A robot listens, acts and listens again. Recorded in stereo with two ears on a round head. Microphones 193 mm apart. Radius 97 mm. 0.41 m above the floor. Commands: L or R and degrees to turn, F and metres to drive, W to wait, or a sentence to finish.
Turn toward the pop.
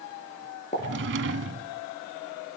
L35
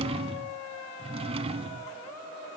W
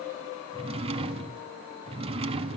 I heard a pop, but can't make it out now. It was about straight ahead or 110° left.